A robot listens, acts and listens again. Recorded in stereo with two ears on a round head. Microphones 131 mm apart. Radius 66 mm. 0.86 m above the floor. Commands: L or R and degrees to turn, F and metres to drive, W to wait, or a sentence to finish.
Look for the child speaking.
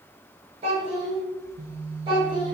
R30
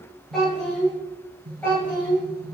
L15
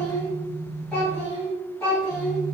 Found it: a child speaking, straight ahead.